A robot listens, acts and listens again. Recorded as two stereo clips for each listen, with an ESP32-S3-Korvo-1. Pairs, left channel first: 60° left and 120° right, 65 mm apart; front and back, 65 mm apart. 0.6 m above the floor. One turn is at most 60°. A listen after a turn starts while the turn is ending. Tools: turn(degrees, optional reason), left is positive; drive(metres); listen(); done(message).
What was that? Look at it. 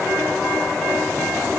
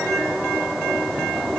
listen()
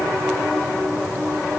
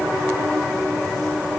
listen()
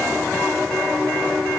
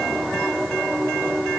done("I can't make out anything to turn to.")